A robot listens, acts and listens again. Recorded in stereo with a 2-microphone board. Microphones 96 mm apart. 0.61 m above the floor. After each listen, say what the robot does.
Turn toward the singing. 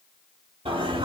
Turn 75° right.
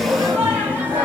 Turn 20° right.
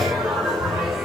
Facing the singing.